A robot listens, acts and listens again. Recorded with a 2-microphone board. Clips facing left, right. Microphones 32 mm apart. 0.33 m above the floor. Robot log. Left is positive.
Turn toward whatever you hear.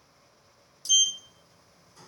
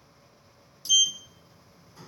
cmd yaw -30
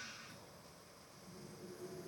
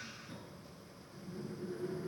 note: So it is at 135° right.
cmd yaw -135
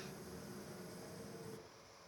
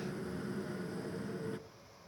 note: The sliding door is now 50° right.
cmd yaw -50
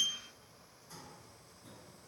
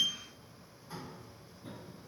note: The sliding door is now 25° right.
cmd yaw -25
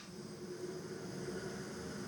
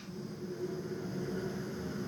note: The sliding door is now 10° right.
cmd yaw -10
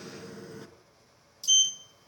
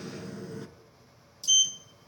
end: Facing the sliding door.